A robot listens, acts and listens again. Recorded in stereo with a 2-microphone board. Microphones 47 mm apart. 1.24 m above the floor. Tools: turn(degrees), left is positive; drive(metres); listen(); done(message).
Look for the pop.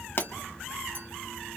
turn(degrees=50)
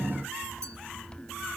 listen()
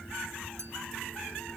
done("I heard a pop, but can't make it out now. It was about straight ahead or 80° left.")